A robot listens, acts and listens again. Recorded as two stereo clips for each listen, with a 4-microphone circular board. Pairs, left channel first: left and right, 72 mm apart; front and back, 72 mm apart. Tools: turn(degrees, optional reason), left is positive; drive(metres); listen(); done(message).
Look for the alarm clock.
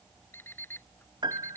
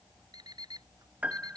turn(degrees=155, reason="The alarm clock: 155° left.")
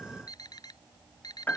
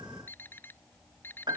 turn(degrees=60, reason="The alarm clock is now 60° left.")
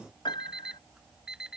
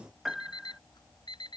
turn(degrees=-10, reason="The alarm clock is now 10° right.")
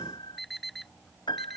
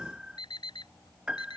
done("Found it: an alarm clock, straight ahead.")